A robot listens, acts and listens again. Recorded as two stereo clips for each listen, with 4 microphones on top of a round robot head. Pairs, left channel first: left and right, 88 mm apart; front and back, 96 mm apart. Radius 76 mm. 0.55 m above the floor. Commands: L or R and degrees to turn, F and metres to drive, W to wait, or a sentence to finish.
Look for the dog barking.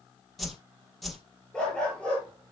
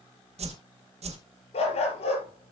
L10
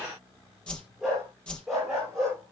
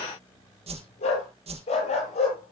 Facing the dog barking, over 4 m away.